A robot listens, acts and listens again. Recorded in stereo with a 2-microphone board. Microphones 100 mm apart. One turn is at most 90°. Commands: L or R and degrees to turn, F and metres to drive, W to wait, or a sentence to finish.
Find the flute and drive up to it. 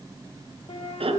L90
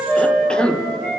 L15
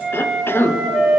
F1.0
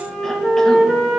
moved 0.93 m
F1.0
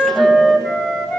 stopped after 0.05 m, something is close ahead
I am next to the flute.